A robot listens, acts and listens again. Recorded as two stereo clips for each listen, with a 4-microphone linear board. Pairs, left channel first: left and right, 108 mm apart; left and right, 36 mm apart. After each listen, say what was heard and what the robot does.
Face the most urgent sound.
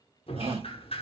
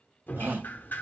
The shout: about 70° right or 110° right. Turn 70° right.
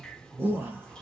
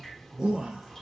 So it is at 20° right. Turn 20° right.
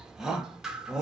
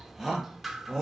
Found it: a shout, straight ahead.